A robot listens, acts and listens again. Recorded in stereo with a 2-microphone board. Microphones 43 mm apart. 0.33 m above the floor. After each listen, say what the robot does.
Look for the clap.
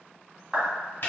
Turn 30° right.
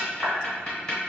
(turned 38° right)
Keep listening.
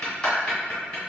Keep listening.
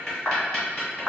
Turn 25° left.
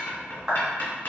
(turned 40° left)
Turn 15° right.
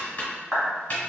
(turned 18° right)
Found it: a clap, straight ahead, 1 to 2 m away.